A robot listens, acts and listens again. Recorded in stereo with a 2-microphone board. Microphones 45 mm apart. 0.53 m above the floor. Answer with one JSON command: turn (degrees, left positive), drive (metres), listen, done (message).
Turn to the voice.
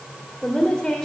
{"turn": 30}
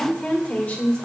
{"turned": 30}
{"turn": 140}
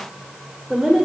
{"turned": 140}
{"done": "Facing the woman speaking."}